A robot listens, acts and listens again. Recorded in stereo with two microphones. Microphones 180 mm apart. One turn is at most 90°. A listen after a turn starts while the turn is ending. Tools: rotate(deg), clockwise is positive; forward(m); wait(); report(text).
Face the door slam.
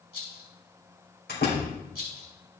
rotate(-65)
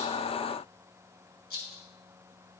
wait()
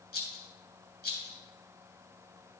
report("I heard a door slam, but can't make it out now. It was about straight ahead or 50° left.")